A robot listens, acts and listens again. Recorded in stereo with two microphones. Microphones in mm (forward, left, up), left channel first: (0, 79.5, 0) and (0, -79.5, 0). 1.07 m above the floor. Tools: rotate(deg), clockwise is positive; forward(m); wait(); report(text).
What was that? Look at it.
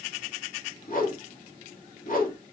rotate(-60)
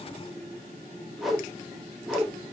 report("Facing the whoosh, under 1 m away.")